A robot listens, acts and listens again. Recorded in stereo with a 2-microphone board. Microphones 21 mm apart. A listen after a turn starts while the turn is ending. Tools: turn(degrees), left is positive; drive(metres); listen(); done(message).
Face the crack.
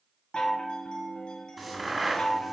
turn(degrees=-30)
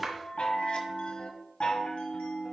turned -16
listen()
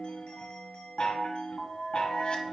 done("I heard a crack, but can't make it out now. It was about 10° left or 155° right.")